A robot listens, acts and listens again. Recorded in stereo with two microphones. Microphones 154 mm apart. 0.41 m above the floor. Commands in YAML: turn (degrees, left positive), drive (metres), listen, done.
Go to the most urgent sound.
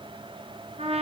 listen: true
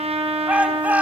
turn: -30
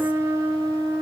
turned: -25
listen: true
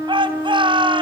turn: -145
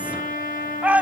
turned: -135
turn: -10
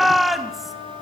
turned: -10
drive: 1.0
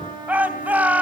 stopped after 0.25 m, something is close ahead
turn: -10
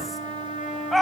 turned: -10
done: "Something is in my way. I am facing the shout but have not reached it."